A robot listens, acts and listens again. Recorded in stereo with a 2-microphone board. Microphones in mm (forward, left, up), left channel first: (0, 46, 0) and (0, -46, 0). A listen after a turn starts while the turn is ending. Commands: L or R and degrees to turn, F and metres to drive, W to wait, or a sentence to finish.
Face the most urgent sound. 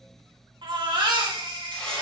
R70
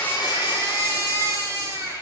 R40
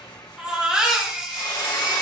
R10
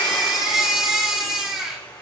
R10
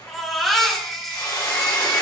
Facing the baby crying.